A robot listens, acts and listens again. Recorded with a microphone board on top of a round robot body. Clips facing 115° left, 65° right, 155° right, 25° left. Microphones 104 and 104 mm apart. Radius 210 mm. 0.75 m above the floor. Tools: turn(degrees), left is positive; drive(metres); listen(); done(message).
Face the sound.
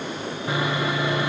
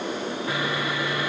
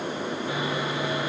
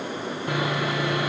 turn(degrees=45)
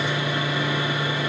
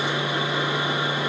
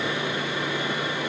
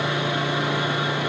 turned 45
done("Found it: sawing, straight ahead.")